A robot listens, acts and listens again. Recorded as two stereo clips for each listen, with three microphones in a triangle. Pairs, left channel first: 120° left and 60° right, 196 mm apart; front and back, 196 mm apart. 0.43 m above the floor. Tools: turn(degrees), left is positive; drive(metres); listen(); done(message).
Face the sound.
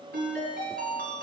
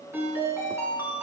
turn(degrees=-100)
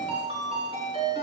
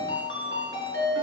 done("Facing the ringtone.")